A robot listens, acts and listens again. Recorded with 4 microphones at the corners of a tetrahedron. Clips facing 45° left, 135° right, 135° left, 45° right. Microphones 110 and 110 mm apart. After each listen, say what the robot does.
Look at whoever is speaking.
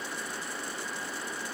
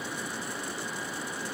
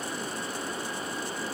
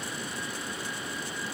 Keep listening.
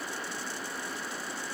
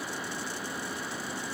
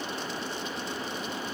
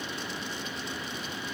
Keep listening.
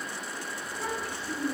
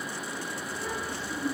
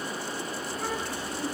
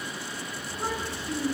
Turn 15° left.
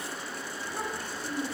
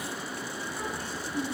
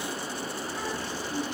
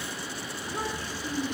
Found it: a child speaking, straight ahead.